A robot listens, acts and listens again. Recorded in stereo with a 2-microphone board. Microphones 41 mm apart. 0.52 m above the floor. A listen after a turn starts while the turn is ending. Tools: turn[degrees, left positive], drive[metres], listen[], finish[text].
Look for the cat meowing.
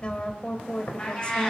Thought: The cat meowing: about 20° left or 160° left.
Action: turn[20]
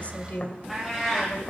Action: finish[Found it: a cat meowing, straight ahead, over 4 m away.]